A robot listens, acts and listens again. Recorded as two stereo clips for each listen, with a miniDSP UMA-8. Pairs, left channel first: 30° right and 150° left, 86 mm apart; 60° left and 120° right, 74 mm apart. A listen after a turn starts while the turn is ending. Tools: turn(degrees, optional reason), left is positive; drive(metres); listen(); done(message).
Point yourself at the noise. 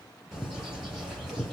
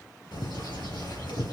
turn(degrees=65, reason="The bird: 65° left.")
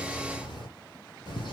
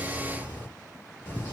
done("Found it: a bird, straight ahead.")